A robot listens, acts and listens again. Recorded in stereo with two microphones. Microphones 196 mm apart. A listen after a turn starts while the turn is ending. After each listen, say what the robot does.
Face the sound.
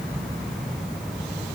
Keep listening.
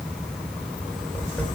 Turn 30° left.
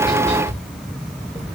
Turn 145° left.
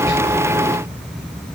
Keep listening.
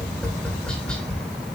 Facing the tapping, 2 to 4 m away.